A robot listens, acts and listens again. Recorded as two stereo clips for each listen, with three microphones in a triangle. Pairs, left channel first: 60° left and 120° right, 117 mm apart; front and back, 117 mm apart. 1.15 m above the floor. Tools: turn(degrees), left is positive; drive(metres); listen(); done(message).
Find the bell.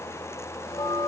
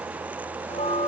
turn(degrees=15)
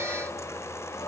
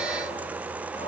listen()
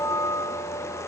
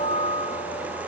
done("Facing the bell, under 1 m away.")